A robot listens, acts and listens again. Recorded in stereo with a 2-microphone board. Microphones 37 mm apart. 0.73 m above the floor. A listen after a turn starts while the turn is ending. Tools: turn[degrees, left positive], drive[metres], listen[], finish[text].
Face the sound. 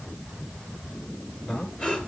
Thought: The breathing: about 25° left or 155° left.
Action: turn[25]
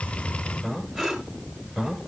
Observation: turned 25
Action: finish[Facing the breathing.]